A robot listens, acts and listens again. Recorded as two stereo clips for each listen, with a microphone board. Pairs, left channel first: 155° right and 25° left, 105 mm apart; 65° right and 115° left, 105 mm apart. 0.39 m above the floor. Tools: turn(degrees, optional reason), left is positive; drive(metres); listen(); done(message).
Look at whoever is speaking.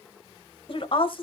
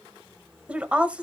turn(degrees=-170, reason="The woman speaking: 170° right.")
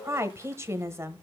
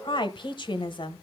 turn(degrees=-40, reason="The woman speaking is now 40° right.")
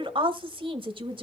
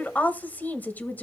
done("Found it: a woman speaking, straight ahead.")